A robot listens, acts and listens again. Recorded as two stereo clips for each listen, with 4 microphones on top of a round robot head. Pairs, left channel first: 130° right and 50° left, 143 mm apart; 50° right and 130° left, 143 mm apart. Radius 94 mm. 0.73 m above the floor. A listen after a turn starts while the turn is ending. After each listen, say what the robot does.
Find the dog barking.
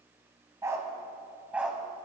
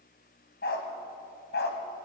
Turn 35° right.
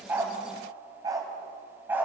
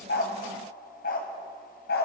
Turn 30° right.
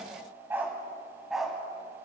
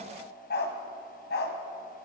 Turn 40° right.
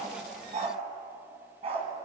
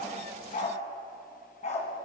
Found it: a dog barking, straight ahead.